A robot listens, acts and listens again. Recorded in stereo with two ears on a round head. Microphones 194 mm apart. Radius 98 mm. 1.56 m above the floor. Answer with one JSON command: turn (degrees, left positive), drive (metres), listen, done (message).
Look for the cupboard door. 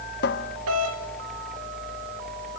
{"turn": 45}
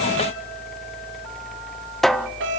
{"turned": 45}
{"done": "Facing the cupboard door."}